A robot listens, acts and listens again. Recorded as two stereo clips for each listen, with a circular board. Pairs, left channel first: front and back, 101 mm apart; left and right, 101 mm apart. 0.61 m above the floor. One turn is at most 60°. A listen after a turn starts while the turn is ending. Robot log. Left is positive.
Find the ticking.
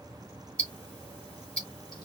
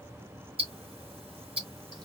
note: The ticking: 80° right.
cmd yaw -60
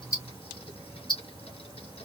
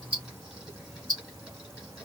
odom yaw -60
note: The ticking is now 40° right.
cmd yaw -40
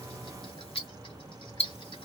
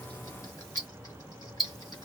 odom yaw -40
end: Found it: ticking, straight ahead, 2 to 4 m away.